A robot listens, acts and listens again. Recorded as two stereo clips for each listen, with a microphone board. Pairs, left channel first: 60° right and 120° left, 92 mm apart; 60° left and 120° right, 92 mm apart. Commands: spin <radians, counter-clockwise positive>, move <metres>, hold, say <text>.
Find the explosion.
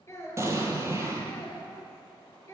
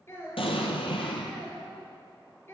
spin 1.05
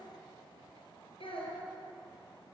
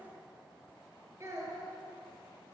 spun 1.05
say Facing where the explosion came from. I can't hear it now.